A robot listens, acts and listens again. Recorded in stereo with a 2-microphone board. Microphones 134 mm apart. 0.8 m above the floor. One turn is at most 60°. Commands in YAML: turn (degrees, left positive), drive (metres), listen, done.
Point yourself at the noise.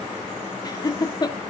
turn: 30
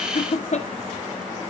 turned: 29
turn: 60
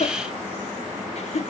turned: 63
turn: 55
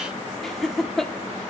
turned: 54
done: "Found it: laughter, straight ahead, 1 to 2 m away."